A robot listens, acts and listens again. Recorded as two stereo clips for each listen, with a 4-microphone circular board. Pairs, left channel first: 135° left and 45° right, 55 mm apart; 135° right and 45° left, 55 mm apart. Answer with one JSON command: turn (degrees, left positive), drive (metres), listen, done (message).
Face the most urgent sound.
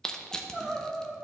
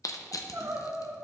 {"turn": 30}
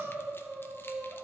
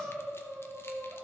{"done": "Facing the crying."}